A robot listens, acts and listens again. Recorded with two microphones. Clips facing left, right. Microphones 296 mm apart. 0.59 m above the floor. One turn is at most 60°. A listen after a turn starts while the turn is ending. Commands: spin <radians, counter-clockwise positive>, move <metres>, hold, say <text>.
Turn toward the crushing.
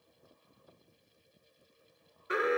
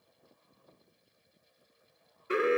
hold
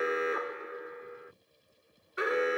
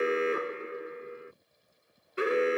hold
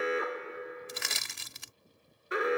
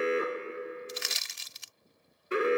spin 1.05
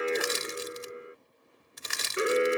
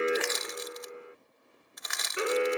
spin 0.70
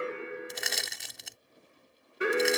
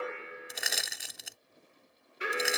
say Facing the crushing.